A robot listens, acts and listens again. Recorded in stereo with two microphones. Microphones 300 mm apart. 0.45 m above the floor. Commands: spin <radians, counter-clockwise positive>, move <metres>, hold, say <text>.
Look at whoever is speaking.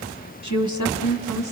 spin 1.31
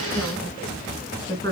spin 0.26
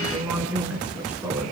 say Facing the woman speaking.